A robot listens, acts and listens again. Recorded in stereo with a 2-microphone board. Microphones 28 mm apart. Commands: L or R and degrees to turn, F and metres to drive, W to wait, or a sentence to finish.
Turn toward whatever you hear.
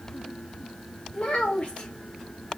L50
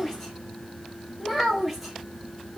Found it: a child speaking, straight ahead.